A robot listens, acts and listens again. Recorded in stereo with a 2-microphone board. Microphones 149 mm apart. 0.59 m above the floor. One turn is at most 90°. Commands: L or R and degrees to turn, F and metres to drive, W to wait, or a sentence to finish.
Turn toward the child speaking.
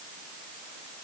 W
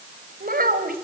R90
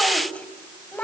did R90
L10
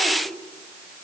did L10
W
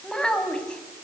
Found it: a child speaking, straight ahead.